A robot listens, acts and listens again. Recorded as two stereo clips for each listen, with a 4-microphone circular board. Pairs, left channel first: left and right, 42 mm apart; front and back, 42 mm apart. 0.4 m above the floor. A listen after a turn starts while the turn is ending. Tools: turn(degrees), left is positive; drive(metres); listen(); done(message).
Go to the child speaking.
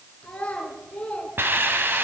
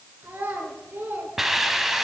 turn(degrees=150)
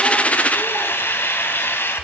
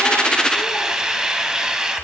listen()
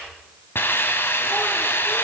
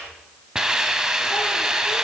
listen()
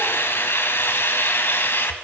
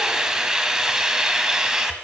done("Facing where the child speaking came from. I can't hear it now. I did not reach it.")